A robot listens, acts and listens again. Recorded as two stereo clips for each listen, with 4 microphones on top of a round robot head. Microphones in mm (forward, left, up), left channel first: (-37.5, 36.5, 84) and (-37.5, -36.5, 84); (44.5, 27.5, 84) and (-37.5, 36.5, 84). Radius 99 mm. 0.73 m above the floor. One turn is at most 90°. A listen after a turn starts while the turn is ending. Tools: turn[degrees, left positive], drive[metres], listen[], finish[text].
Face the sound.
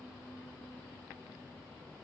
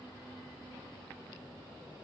Action: listen[]
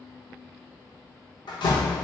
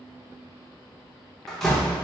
Thought: The door slam: 80° left.
Action: turn[80]
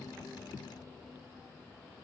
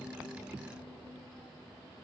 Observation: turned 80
Action: finish[Facing where the door slam came from. I can't hear it now.]